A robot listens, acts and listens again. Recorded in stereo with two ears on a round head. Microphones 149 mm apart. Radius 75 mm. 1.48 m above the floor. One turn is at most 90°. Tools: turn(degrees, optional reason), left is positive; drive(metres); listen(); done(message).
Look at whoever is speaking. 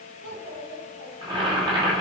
turn(degrees=-90)
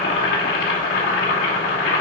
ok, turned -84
listen()
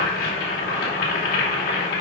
listen()
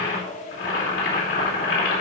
turn(degrees=50, reason="The child speaking is now 50° left.")
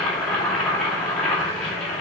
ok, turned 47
listen()
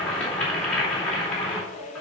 done("Facing the child speaking, over 4 m away.")